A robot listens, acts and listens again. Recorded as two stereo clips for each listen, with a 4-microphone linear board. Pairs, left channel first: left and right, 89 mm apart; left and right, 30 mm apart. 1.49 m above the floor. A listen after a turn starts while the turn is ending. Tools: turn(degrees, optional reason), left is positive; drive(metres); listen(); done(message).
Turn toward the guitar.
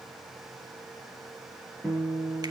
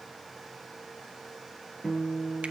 turn(degrees=30)
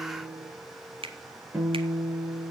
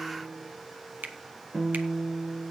turn(degrees=-20, reason="So it is at 20° right.")
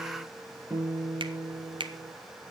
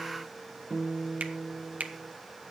done("Found it: a guitar, straight ahead.")